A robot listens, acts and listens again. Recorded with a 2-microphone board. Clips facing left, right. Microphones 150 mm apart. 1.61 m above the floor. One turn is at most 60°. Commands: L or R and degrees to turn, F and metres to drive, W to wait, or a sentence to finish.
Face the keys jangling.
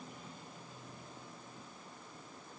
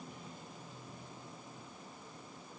W
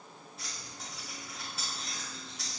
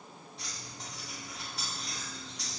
L30
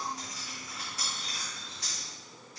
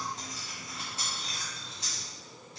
R25
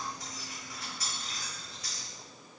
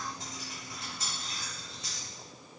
R25
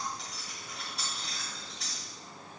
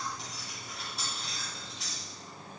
Facing the keys jangling.